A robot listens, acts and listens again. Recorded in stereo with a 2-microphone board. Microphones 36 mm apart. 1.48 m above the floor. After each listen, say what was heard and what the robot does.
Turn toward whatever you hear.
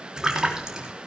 The splash: about 20° right or 160° right. Turn 20° right.
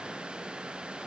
Keep listening.
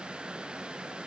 I heard a splash, but can't make it out now. It was about straight ahead or 140° right.